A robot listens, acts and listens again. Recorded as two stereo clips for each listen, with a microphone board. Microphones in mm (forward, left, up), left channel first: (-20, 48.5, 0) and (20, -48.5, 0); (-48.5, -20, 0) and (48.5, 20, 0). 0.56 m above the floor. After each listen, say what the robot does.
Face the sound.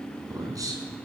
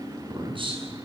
Turn 10° right.
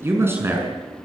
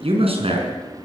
Found it: a man speaking, straight ahead.